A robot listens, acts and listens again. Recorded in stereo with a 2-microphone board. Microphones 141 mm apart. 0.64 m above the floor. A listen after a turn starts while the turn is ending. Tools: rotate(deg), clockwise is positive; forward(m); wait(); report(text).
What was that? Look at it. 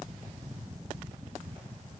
wait()
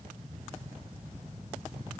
wait()
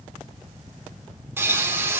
rotate(15)
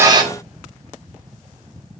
rotate(150)
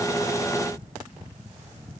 report("Facing where the pop came from. I can't hear it now.")